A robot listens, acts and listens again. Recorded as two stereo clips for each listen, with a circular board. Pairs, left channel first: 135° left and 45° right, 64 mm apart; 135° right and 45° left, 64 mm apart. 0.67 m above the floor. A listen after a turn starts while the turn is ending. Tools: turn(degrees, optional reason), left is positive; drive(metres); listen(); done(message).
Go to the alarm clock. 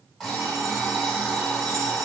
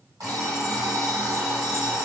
turn(degrees=50, reason="The alarm clock: 50° left.")
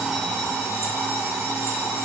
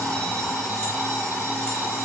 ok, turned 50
turn(degrees=-10, reason="The alarm clock is now 10° right.")
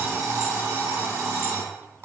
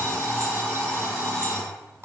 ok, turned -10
drive(metres=1.0)
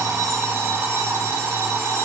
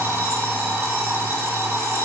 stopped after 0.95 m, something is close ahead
done("Arrived at the alarm clock, straight ahead.")